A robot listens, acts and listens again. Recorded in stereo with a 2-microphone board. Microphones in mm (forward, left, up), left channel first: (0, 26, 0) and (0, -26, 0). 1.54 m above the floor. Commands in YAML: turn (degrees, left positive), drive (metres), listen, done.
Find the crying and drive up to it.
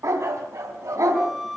listen: true
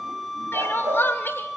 turn: 45
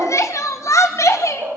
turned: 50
turn: 85
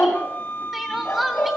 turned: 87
drive: 1.0
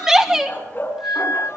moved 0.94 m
turn: -10
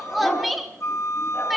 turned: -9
drive: 1.0
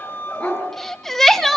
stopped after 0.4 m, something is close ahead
done: "Arrived at the crying, straight ahead."